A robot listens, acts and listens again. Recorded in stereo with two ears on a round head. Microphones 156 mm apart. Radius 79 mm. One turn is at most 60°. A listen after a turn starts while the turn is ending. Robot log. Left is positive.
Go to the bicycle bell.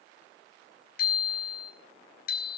note: The bicycle bell: about 60° left or 120° left.
cmd yaw +60
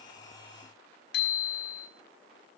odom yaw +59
note: So it is at 60° left.
cmd yaw +60
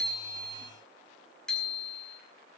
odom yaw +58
cmd fwd 1.0
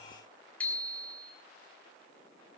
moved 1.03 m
cmd fwd 1.0
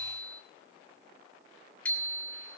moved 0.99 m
note: The bicycle bell is now 10° left.
cmd yaw +10
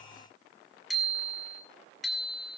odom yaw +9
cmd fwd 1.0
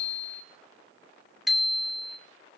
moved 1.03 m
cmd fwd 1.0
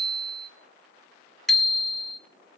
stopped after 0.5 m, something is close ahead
end: I am next to the bicycle bell.